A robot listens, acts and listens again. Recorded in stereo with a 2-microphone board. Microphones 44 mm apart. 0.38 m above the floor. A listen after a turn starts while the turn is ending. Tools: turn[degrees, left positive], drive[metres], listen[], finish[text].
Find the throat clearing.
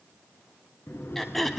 Action: turn[30]
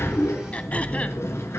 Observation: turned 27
Action: listen[]
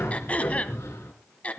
Thought: So it is at 150° left.
Action: turn[150]
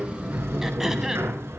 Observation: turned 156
Thought: Nothing new. It was at 10° right.
Action: turn[-10]
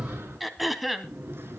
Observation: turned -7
Action: finish[Found it: throat clearing, straight ahead, 1 to 2 m away.]